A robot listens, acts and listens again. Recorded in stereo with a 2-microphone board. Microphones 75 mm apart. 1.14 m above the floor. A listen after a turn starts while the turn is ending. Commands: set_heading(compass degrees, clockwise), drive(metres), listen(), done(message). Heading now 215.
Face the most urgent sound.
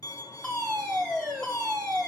set_heading(185)
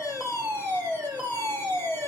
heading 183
set_heading(203)
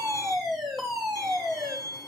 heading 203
done("Found it: a fire alarm, straight ahead.")